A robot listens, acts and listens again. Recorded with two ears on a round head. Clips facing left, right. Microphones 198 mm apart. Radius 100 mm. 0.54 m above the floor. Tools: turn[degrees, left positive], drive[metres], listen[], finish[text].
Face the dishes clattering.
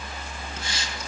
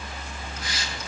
Action: listen[]
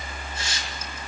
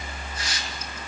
Action: listen[]
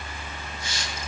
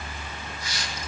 Action: finish[I can't make out dishes clattering to turn to.]